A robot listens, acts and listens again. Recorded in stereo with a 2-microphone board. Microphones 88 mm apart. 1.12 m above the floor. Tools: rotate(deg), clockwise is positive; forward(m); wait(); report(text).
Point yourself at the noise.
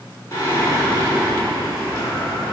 rotate(-35)
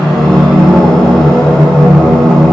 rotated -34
report("Found it: singing, straight ahead.")